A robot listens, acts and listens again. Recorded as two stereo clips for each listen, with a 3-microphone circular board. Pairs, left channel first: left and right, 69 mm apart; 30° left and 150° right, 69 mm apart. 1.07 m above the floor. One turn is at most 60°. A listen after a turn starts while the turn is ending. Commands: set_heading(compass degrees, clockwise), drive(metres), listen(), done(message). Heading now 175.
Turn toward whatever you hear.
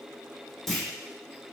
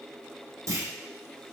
set_heading(115)
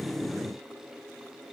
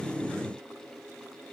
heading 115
set_heading(55)
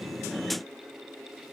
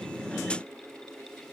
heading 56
set_heading(1)
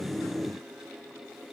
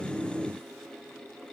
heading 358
done("Facing where the clunk came from. I can't hear it now.")